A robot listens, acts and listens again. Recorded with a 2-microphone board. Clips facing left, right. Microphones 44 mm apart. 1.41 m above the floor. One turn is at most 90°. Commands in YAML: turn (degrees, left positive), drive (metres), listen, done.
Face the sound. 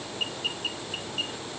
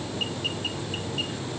listen: true
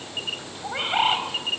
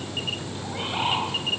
turn: 45
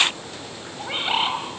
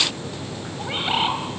done: "Facing the bird, over 4 m away."